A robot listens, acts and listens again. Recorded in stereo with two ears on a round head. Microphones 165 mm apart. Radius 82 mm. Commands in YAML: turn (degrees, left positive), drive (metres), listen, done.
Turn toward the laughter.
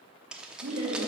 turn: -60
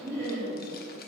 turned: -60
turn: -15
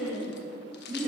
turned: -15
done: "Found it: laughter, straight ahead, 2 to 4 m away."